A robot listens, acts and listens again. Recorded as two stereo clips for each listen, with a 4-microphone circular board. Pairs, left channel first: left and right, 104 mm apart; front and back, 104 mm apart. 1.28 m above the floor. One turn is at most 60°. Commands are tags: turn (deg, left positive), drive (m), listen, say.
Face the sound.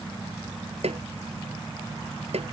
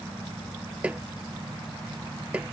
<turn deg="-60"/>
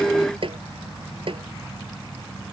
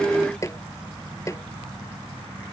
<turn deg="-60"/>
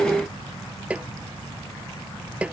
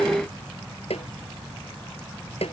<turn deg="-15"/>
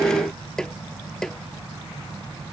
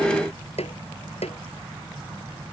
<say>Found it: a snare drum, straight ahead.</say>